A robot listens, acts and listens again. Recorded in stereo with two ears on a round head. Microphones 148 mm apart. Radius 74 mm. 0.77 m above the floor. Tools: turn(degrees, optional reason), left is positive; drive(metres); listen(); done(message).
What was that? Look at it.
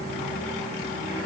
listen()
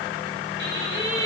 turn(degrees=-75, reason="The singing: about 75° right or 105° right.")
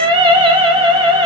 turn(degrees=-30, reason="So it is at 30° right.")
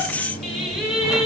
done("Facing the singing.")